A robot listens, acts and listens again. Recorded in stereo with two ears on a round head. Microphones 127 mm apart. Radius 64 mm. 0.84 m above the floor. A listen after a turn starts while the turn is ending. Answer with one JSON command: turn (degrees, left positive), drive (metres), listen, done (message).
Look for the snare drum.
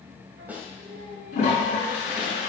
{"turn": -30}
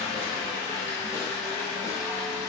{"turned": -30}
{"listen": true}
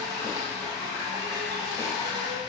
{"listen": true}
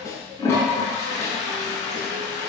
{"turn": 20}
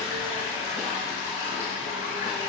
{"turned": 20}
{"listen": true}
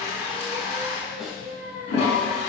{"listen": true}
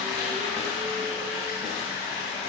{"done": "I heard a snare drum from this way, but can't make it out now."}